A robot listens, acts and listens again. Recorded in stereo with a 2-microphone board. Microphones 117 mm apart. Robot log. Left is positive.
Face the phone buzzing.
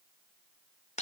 cmd idle
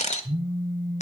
cmd yaw -90
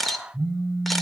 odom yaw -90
end: Found it: a phone buzzing, straight ahead.